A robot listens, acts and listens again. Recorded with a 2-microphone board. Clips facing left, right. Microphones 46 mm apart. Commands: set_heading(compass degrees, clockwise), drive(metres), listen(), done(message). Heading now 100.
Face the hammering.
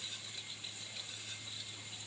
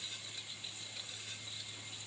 listen()
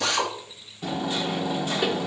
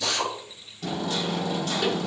set_heading(80)
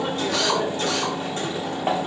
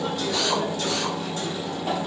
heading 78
set_heading(298)
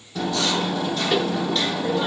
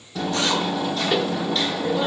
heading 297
done("Facing the hammering, 1 to 2 m away.")